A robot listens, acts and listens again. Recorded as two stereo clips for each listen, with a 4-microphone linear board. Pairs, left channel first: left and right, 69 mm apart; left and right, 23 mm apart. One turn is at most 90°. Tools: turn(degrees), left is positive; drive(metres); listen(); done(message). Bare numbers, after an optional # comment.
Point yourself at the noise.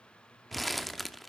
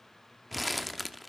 turn(30)
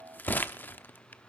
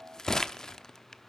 # So it is at 150° left.
turn(90)
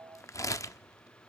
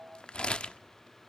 # The crumpling is now 55° left.
turn(55)
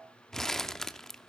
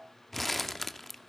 done("Found it: crumpling, straight ahead, under 1 m away.")